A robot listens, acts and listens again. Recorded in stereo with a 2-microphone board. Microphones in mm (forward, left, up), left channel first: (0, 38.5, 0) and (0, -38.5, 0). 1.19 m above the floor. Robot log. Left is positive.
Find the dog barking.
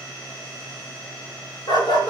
note: The dog barking: about 70° left or 110° left.
cmd yaw +70
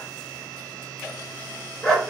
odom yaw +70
end: Facing the dog barking.